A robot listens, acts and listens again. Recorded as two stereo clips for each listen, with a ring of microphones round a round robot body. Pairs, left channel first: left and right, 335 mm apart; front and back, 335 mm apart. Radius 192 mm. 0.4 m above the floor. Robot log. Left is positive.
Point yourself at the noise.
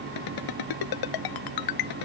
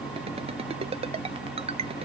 note: The ringtone: 105° left.
cmd yaw +105
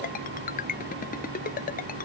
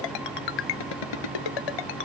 note: The ringtone is now 20° left.
cmd yaw +20
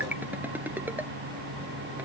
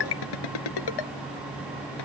end: Facing the ringtone.